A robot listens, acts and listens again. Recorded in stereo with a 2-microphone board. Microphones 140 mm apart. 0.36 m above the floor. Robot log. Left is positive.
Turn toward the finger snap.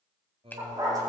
cmd yaw +30
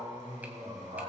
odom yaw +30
cmd idle
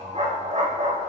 cmd idle
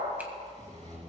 end: I heard a finger snap, but can't make it out now. It was about 15° right or 135° left.